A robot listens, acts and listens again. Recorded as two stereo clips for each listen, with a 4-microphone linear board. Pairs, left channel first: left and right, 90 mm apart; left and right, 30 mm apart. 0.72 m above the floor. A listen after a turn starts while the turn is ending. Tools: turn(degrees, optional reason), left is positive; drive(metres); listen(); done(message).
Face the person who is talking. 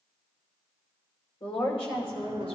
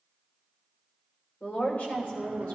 turn(degrees=75, reason="The woman speaking: about 75° left or 105° left.")
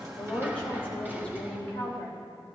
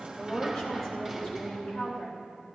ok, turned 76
turn(degrees=15, reason="So it is at 15° left.")
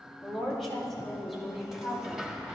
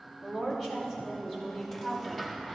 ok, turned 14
done("Facing the woman speaking.")